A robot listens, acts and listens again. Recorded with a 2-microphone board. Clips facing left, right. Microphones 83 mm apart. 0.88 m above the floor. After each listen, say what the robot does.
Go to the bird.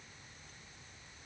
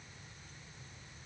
Keep listening.
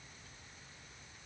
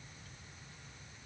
Keep listening.
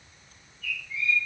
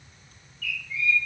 Turn 25° left.
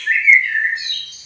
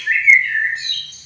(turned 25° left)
Drive 1.0 m forward.
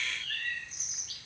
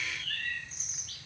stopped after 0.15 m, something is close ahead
Blocked. The bird is further on, straight ahead.